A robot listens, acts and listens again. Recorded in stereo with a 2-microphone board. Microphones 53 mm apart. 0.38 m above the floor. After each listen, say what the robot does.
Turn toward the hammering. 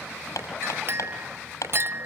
Turn 90° left.
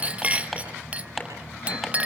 Found it: hammering, straight ahead, over 4 m away.